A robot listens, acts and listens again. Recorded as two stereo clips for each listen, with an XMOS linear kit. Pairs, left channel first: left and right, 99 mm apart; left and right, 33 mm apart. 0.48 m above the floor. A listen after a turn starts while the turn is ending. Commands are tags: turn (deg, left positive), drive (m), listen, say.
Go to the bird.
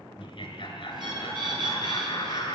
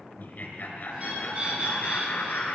<turn deg="-55"/>
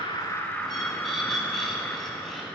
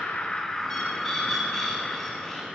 <drive m="1.0"/>
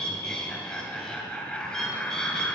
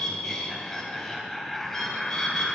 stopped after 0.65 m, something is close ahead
<say>Something is in my way. I am facing the bird but have not reached it.</say>